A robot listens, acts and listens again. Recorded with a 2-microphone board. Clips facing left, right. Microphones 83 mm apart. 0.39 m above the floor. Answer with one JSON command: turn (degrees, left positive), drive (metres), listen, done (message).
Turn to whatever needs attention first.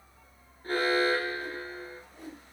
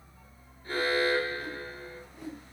{"turn": 55}
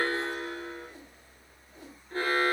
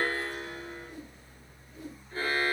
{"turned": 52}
{"turn": 70}
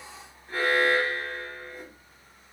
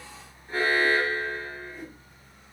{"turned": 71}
{"done": "Facing the alarm, 1 to 2 m away."}